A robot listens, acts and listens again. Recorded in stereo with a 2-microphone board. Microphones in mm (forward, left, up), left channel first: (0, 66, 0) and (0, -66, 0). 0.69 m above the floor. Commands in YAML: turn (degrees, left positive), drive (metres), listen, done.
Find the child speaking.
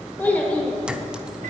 turn: 30
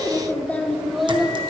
turn: -30
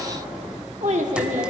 turn: -110
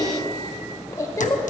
turn: 25
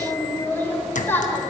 turn: 15
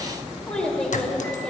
done: "Facing the child speaking, 1 to 2 m away."